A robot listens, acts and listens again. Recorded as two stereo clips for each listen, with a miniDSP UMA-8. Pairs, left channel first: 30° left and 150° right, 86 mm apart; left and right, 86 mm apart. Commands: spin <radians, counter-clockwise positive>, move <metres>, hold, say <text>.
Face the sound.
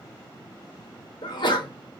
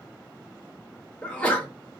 spin 0.26
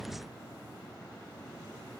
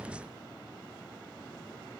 say Facing where the sneeze came from. I can't hear it now.